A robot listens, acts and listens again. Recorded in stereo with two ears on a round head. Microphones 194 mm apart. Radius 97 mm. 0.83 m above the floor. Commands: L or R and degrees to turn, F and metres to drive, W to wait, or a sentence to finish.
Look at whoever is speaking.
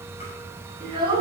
R20
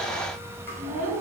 R35
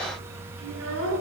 R110
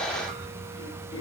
W
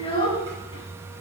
L25
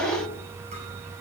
Facing the child speaking, over 4 m away.